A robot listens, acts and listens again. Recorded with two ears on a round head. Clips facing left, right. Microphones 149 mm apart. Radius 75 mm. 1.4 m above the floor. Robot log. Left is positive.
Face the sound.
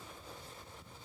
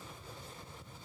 cmd idle
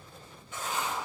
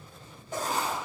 note: The writing: about 35° right or 145° right.
cmd yaw -35
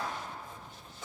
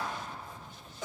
note: So it is at 110° right.
cmd yaw -110
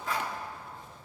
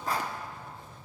note: The writing is now 35° right.
cmd yaw -35
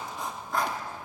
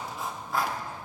end: Found it: writing, straight ahead.